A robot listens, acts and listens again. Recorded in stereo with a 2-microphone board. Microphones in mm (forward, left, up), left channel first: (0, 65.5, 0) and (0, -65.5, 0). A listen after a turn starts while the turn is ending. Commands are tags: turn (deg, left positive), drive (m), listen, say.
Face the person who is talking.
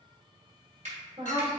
<turn deg="-45"/>
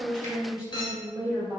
<turn deg="-10"/>
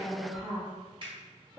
<say>Found it: a woman speaking, straight ahead, 1 to 2 m away.</say>